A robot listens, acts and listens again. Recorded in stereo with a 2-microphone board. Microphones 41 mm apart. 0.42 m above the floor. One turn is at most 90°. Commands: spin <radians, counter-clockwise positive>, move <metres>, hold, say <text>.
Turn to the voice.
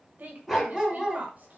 spin -0.79
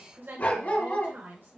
spin -1.48
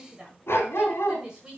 spin -0.35
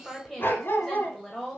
say Found it: a woman speaking, straight ahead, 1 to 2 m away.